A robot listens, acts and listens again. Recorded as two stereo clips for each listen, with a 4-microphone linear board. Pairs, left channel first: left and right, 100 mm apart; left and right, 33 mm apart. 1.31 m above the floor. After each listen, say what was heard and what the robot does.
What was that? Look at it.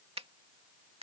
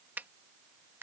Turn 90° right.
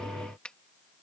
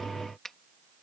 So it is at 10° left. Turn 10° left.
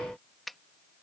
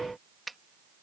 Facing the finger snap.